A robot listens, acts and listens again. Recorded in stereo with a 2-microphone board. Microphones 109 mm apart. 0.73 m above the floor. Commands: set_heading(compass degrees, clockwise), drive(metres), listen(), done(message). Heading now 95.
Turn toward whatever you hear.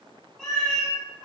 set_heading(65)
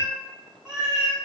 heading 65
set_heading(95)
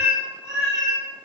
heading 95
set_heading(60)
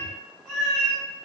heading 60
set_heading(50)
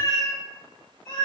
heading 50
done("Found it: a cat meowing, straight ahead.")